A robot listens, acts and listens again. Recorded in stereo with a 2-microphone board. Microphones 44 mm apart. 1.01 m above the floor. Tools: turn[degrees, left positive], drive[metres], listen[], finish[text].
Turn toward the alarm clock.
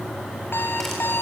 Thought: The alarm clock: about 60° left or 120° left.
Action: turn[60]
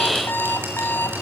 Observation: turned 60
Thought: So it is at 60° left.
Action: turn[60]
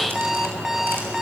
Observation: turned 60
Thought: The alarm clock is now 10° right.
Action: turn[-10]
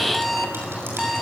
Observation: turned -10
Action: finish[Facing the alarm clock.]